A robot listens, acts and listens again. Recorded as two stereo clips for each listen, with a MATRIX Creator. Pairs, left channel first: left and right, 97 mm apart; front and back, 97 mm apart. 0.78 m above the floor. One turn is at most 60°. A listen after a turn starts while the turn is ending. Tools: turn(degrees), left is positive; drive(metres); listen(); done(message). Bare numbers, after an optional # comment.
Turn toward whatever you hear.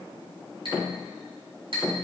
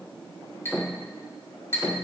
# The clink: 65° right.
turn(-60)
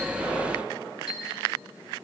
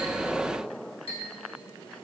listen()
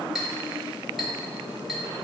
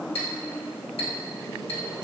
done("Facing the clink.")